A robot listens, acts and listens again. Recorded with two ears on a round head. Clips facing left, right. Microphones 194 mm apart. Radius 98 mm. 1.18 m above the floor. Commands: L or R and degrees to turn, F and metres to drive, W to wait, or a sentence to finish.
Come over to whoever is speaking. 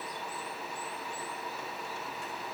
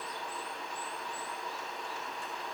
W
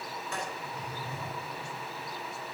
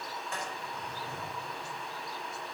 W
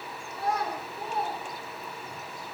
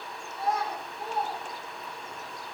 L50
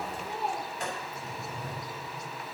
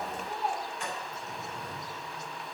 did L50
L80
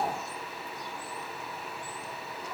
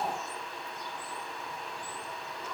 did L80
L15
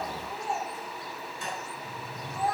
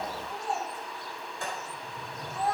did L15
F1.0
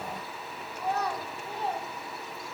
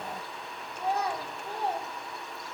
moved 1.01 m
R10
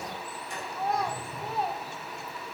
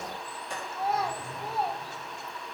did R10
F1.0
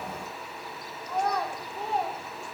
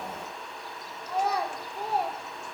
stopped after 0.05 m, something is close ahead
Arrived at the child speaking, straight ahead.